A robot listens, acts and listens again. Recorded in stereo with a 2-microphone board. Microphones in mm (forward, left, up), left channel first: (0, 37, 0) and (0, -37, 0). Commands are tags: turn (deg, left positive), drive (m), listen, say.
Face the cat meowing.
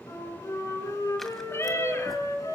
<turn deg="40"/>
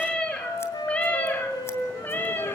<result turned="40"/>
<turn deg="30"/>
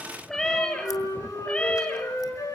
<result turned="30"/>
<turn deg="15"/>
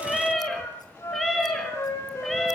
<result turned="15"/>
<say>Found it: a cat meowing, straight ahead.</say>